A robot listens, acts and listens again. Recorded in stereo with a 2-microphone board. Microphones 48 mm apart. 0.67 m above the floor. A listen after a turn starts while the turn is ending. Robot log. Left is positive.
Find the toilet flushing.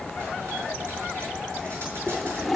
cmd yaw +30
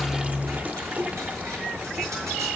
note: So it is at 30° right.
cmd yaw -30
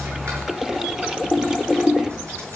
note: The toilet flushing is now 10° right.
cmd yaw -10
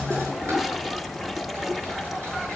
end: Found it: a toilet flushing, straight ahead.